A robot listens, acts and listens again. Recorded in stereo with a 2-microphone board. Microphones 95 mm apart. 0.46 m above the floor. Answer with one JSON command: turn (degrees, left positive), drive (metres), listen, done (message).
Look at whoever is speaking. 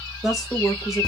{"turn": 30}
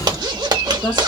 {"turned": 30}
{"turn": 150}
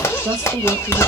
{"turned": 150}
{"turn": -50}
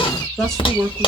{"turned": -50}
{"done": "Found it: a woman speaking, straight ahead, 1 to 2 m away."}